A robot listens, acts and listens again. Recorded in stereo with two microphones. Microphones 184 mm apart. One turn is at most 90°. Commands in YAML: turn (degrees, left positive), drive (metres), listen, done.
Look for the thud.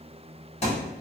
turn: 35
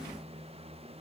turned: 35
listen: true
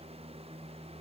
done: "I heard a thud, but can't make it out now. It was about straight ahead or 110° left."